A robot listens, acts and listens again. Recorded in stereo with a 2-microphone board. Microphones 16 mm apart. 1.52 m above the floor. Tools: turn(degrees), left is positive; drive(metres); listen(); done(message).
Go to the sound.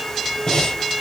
turn(degrees=55)
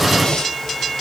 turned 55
turn(degrees=60)
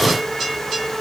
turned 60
listen()
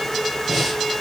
drive(metres=1.0)
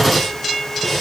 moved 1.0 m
drive(metres=1.0)
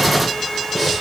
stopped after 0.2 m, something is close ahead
done("I am next to the breathing.")